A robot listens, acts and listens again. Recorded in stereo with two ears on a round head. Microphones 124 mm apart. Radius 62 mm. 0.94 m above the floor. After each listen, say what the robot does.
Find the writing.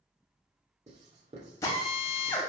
Turn 50° right.
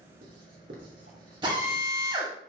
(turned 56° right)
Turn 70° right.
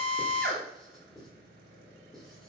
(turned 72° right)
Facing the writing, 2 to 4 m away.